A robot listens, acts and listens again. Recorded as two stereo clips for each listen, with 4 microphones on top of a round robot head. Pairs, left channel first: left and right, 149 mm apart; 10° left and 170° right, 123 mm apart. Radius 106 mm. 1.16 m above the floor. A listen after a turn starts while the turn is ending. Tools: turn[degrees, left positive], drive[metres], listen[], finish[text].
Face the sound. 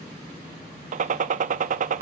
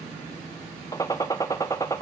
Thought: The gunshot: 60° right.
Action: turn[-60]
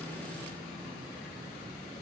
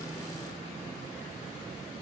Action: finish[Facing where the gunshot came from. I can't hear it now.]